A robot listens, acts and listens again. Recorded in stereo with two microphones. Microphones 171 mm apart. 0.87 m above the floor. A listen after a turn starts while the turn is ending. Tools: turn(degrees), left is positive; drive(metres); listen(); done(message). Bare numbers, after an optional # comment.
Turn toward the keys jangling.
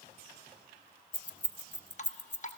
turn(90)
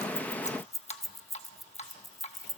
done("Facing the keys jangling, under 1 m away.")